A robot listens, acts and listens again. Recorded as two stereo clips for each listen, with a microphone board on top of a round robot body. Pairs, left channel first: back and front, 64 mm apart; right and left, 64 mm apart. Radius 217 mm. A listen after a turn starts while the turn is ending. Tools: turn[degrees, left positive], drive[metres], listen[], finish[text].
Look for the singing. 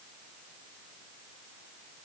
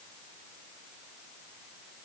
Action: listen[]
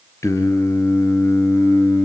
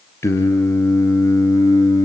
Thought: The singing: 130° right.
Action: turn[-130]
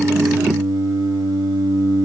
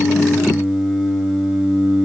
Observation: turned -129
Action: finish[Facing the singing.]